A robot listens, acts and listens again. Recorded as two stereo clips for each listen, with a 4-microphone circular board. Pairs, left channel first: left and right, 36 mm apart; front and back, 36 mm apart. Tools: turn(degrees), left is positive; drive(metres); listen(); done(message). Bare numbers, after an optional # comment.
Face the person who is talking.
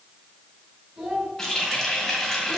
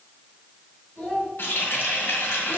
# The child speaking: 30° right.
turn(-30)
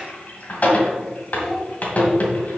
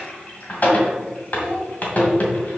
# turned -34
listen()
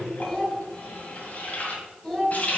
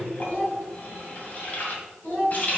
done("Found it: a child speaking, straight ahead.")